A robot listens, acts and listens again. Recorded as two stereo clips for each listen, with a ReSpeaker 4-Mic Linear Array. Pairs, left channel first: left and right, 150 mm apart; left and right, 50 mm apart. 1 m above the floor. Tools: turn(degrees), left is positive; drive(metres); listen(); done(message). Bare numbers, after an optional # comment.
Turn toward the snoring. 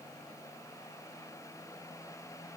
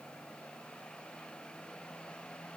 listen()
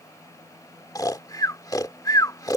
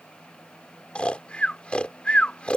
# The snoring: about 25° left or 155° left.
turn(25)
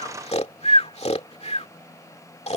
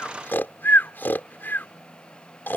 # So it is at 135° left.
turn(135)
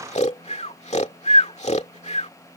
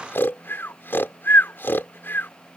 # The snoring is now 50° left.
turn(50)
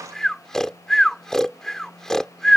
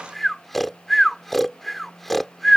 done("Facing the snoring.")